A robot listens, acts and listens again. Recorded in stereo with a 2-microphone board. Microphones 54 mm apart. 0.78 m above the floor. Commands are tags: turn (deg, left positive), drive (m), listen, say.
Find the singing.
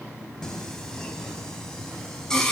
<turn deg="30"/>
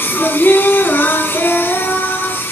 <turn deg="135"/>
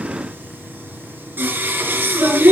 <turn deg="-35"/>
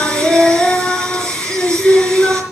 <turn deg="15"/>
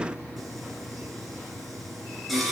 <say>Found it: singing, straight ahead.</say>